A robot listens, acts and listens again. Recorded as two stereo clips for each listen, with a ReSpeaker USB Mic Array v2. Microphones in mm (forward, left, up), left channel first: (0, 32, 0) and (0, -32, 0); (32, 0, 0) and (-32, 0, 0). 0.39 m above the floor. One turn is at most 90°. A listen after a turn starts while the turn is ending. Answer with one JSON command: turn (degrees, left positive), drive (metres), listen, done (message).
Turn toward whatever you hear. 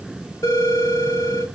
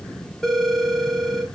{"turn": 80}
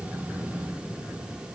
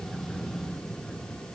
{"listen": true}
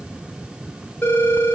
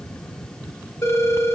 {"turn": 30}
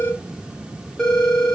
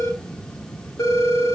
{"turn": 10}
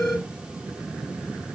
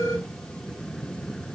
{"listen": true}
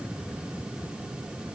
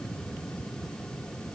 {"listen": true}
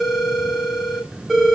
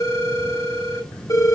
{"done": "Found it: a phone ringing, straight ahead."}